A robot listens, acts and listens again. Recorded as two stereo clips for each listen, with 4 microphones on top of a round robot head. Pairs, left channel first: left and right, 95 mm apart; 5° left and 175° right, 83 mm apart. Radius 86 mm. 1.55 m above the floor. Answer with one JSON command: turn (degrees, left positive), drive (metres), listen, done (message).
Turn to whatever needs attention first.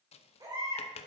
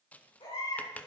{"turn": -40}
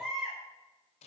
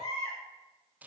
{"done": "Found it: a baby crying, straight ahead."}